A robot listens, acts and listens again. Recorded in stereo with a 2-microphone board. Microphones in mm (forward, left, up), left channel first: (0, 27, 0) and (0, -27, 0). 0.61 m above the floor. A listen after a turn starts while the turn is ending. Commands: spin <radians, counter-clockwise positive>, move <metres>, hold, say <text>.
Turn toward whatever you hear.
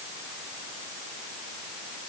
hold
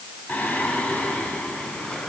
spin 0.35
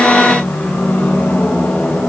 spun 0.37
spin 0.61
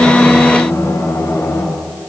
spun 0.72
spin 1.92
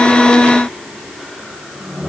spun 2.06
say Found it: singing, straight ahead.